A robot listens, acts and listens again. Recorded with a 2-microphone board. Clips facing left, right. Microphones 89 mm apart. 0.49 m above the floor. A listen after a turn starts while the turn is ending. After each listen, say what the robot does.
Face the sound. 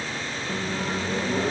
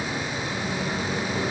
Turn 40° left.
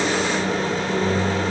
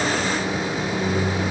Turn 90° left.
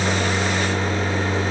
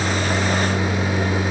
Turn 15° left.
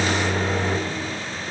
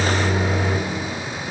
Facing the microwave, under 1 m away.